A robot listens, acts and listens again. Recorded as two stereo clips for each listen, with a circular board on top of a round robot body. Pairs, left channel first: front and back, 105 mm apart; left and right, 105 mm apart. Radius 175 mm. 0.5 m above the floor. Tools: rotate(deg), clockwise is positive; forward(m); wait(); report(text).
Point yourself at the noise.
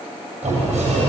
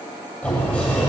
rotate(-170)
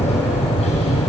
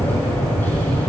rotate(-20)
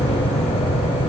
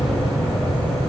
report("Facing the sliding door.")